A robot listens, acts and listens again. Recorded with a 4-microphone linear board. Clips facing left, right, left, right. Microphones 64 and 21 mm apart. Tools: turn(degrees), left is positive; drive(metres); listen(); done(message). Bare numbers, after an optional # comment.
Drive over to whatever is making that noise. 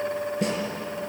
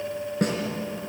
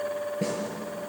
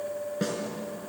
# The snare drum: about 55° right or 125° right.
turn(-55)
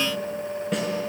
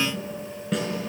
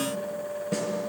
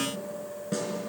drive(1.0)
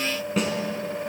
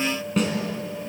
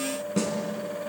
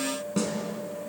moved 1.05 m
drive(1.0)
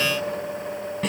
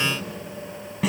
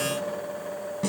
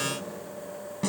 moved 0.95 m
drive(1.0)
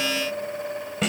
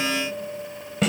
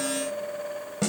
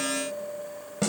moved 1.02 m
drive(1.0)
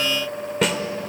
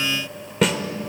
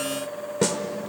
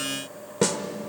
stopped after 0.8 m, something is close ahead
done("Arrived at the snare drum, straight ahead.")